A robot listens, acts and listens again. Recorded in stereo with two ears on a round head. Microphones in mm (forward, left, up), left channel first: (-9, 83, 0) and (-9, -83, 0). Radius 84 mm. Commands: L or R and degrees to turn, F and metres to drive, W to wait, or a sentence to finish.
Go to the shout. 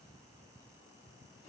W
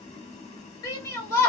L20
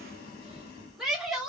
F1.0
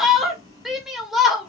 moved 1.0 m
F1.0
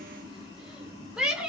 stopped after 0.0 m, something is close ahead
I am next to the shout.